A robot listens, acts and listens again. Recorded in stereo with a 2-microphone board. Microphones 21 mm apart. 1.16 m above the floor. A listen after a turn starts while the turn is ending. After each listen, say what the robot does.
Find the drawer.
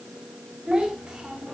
Keep listening.
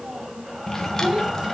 Turn 20° left.
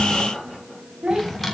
Found it: a drawer, straight ahead.